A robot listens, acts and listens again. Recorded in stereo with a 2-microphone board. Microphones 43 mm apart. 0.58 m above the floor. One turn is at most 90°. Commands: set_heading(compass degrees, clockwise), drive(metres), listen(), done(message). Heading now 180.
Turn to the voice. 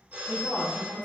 set_heading(140)
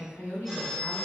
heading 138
set_heading(48)
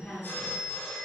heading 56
set_heading(11)
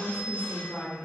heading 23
set_heading(333)
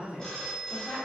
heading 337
set_heading(322)
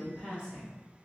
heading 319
done("Facing the woman speaking.")